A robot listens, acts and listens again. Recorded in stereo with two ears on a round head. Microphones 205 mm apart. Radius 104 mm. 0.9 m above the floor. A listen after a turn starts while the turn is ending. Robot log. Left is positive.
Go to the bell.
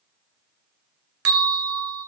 cmd yaw -90
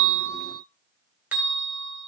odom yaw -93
note: So it is at 10° right.
cmd yaw -10
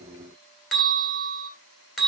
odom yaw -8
cmd fwd 1.0
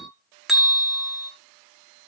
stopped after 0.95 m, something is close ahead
end: Arrived at the bell, straight ahead.